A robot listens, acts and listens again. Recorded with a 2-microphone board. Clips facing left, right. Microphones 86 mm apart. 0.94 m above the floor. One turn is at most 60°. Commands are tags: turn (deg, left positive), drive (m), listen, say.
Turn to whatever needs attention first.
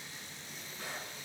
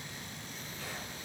<listen/>
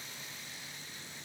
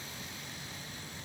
<listen/>
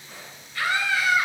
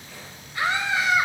<turn deg="-20"/>
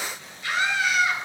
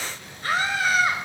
<turn deg="-60"/>
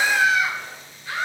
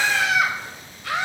<turn deg="-60"/>
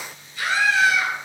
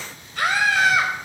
<turn deg="-60"/>
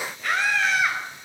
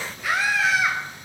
<say>Found it: a scream, straight ahead, over 4 m away.</say>